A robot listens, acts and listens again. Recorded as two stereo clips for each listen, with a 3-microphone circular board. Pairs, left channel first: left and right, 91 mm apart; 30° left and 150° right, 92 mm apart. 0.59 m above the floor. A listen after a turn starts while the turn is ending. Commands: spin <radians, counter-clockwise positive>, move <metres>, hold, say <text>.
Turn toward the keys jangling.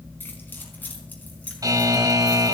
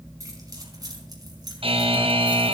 spin 2.88
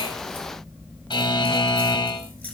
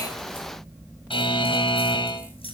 spin 0.26
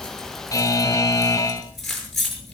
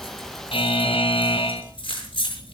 say Facing the keys jangling, over 4 m away.